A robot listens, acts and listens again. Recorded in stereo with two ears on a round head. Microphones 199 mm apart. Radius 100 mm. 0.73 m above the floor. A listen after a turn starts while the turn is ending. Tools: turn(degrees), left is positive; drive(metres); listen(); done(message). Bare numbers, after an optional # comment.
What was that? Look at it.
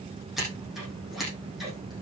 turn(30)
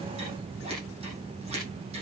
listen()
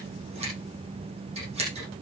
# So it is at 30° right.
turn(-30)
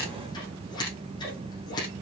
# The scissors is now 20° left.
turn(20)
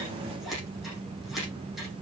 done("Facing the scissors, over 4 m away.")